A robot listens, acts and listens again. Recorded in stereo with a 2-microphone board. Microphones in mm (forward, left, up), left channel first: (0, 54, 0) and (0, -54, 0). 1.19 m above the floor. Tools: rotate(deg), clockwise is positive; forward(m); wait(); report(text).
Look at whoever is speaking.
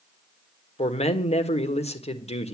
rotate(-90)
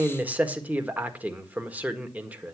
rotate(15)
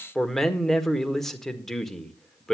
report("Found it: a man speaking, straight ahead.")